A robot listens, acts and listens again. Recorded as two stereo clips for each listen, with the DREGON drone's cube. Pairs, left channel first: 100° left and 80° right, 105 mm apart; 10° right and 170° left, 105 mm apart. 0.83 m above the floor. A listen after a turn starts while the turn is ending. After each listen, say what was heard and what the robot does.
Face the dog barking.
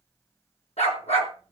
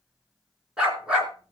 The dog barking: 90° left. Turn 90° left.
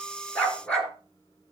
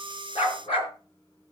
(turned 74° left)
The dog barking is now 20° left. Turn 20° left.
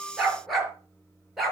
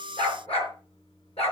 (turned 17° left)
The dog barking is now 10° left. Turn 10° left.
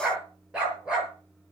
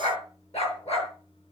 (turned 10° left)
Facing the dog barking.